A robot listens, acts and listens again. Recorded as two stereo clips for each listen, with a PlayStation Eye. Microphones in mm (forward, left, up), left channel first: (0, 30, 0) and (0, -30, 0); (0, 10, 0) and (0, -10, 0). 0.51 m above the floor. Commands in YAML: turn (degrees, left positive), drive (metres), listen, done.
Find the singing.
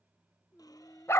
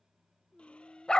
turn: 20
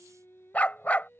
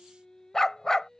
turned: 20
turn: 35
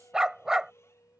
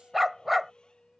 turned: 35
turn: 115
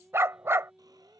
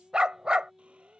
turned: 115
done: "Found it: singing, straight ahead."